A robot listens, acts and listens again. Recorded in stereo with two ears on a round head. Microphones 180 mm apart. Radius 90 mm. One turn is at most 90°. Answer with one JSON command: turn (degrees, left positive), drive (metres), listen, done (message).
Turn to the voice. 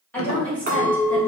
{"turn": 30}
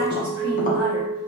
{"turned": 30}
{"listen": true}
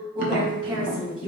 {"turn": -20}
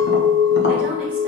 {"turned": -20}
{"listen": true}
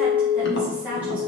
{"done": "Facing the woman speaking."}